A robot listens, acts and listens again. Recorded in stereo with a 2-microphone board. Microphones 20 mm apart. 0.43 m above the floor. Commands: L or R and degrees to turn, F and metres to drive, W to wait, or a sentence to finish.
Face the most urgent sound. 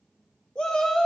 L50
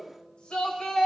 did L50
L65
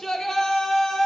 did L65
L35
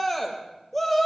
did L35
L10
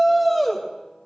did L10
Found it: a shout, straight ahead, 1 to 2 m away.